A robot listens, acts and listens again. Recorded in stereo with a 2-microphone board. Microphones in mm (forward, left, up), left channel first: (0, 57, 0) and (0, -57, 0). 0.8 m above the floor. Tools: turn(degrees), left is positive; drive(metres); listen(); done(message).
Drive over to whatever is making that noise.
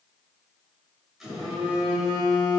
turn(degrees=-30)
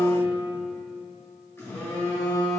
turn(degrees=25)
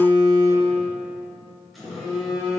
drive(metres=1.0)
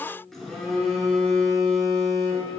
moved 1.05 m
drive(metres=1.0)
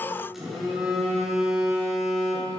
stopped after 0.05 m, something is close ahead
done("Arrived at the phone buzzing, straight ahead.")